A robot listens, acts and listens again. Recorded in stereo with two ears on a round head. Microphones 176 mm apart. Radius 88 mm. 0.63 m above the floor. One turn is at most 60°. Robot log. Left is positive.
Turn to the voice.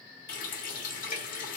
cmd idle
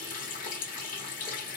cmd idle
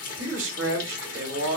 note: The man speaking: about 65° right or 115° right.
cmd yaw -60
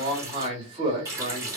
note: So it is at 30° right.
cmd yaw -30
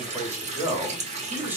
note: The man speaking is now 10° right.
cmd yaw -10
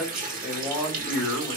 end: Facing the man speaking.